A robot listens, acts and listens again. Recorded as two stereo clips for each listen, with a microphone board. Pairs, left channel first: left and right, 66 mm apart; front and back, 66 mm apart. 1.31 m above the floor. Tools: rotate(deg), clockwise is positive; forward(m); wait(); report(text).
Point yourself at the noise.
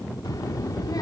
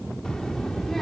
rotate(-85)
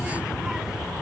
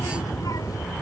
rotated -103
rotate(10)
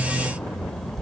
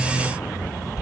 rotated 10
report("Facing the child speaking.")